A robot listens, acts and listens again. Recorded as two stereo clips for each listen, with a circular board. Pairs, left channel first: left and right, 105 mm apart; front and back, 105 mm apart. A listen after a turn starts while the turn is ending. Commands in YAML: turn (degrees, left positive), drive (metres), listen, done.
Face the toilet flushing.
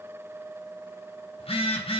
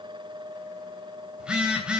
listen: true
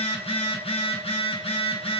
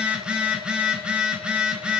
listen: true
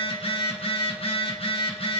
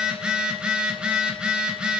done: "I can't make out a toilet flushing, only a phone buzzing."